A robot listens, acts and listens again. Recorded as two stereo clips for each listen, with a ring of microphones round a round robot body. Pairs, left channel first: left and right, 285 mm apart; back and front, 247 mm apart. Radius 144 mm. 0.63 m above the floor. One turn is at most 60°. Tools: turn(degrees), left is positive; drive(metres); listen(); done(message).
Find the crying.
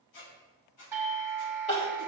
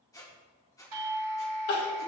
turn(degrees=60)
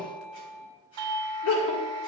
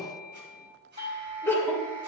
turn(degrees=60)
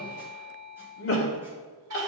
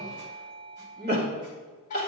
turn(degrees=45)
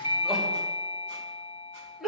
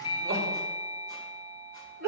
done("Facing the crying, 2 to 4 m away.")